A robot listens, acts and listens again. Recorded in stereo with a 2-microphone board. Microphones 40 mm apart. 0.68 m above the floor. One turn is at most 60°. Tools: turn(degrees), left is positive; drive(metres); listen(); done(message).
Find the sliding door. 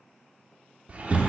turn(degrees=-35)
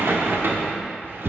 turn(degrees=-60)
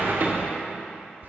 turn(degrees=-50)
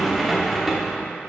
done("Facing the sliding door.")